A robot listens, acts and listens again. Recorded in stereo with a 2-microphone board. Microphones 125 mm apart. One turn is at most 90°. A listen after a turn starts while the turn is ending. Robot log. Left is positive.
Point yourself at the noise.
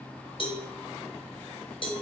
note: The cowbell: about 45° left or 135° left.
cmd yaw +45
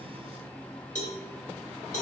note: So it is at 90° left.
cmd yaw +90
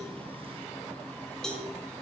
end: Found it: a cowbell, straight ahead, 1 to 2 m away.